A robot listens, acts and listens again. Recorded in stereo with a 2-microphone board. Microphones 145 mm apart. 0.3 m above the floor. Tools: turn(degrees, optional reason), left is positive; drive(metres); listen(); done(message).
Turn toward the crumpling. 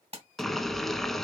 turn(degrees=-45, reason="The crumpling: about 45° right or 135° right.")
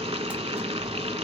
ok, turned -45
listen()
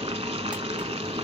listen()
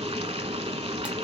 done("I heard crumpling, but can't make it out now. It was about straight ahead or 90° right.")